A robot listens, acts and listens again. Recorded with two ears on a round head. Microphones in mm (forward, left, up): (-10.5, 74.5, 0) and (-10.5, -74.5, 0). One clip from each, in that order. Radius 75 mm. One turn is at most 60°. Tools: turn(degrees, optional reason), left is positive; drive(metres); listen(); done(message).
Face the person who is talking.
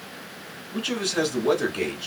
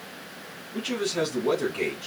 turn(degrees=35, reason="The man speaking: about 35° left or 145° left.")
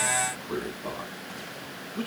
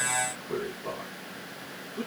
turn(degrees=60, reason="So it is at 115° left.")
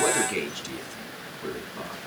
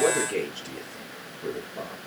turn(degrees=50, reason="The man speaking is now 50° left.")
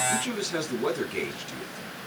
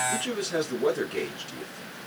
turn(degrees=10, reason="The man speaking is now 10° left.")
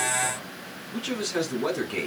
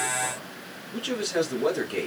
done("Found it: a man speaking, straight ahead.")